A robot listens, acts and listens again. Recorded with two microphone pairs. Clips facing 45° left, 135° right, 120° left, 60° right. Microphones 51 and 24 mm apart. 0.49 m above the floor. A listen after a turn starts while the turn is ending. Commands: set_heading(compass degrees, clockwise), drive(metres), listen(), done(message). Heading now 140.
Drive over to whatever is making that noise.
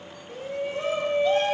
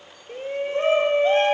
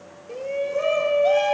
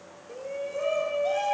set_heading(325)
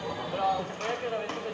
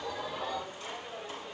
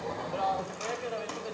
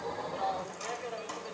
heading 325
set_heading(280)
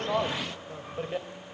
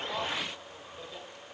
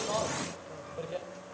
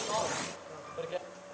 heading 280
set_heading(265)
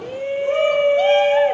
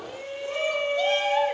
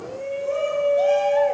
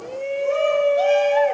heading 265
drive(1.0)
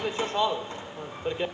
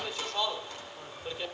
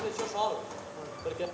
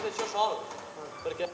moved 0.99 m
drive(1.0)
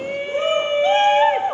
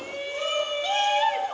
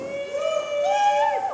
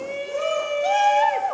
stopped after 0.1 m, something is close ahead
done("I am next to the shout.")